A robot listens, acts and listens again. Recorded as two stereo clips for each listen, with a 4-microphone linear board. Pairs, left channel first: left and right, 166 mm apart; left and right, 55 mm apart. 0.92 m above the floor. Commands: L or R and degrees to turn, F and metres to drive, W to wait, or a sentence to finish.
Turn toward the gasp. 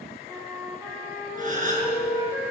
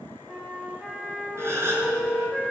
R50
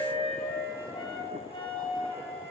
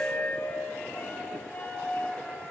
W
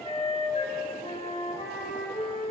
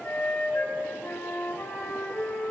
I heard a gasp, but can't make it out now. It was about straight ahead or 80° right.